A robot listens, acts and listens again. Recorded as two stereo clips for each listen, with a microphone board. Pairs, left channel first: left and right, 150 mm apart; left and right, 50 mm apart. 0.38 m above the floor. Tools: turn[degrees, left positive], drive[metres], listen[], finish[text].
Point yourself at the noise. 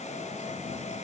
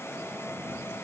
Action: listen[]
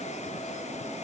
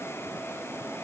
Action: listen[]
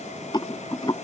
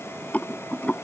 Thought: The rattle: about 30° left or 150° left.
Action: turn[30]
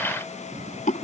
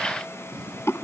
Thought: So it is at 115° left.
Action: turn[115]
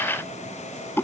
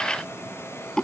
Thought: The rattle is now 15° left.
Action: turn[15]
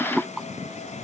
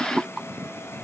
Action: finish[Facing the rattle.]